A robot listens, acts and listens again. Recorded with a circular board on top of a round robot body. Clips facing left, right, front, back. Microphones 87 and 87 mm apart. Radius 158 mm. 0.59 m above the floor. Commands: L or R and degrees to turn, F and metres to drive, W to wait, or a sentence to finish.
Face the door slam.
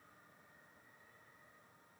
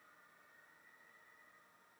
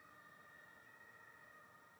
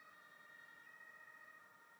W
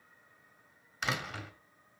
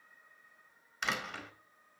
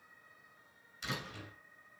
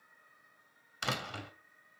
L180
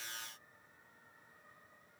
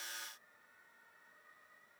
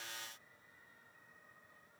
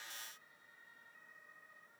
I heard a door slam from this way, but can't make it out now.